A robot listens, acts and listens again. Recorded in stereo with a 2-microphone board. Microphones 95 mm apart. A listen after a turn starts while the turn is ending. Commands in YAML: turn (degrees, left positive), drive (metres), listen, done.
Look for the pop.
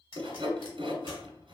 turn: 65
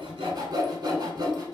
listen: true
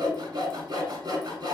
done: "I heard a pop, but can't make it out now. It was about straight ahead or 50° left."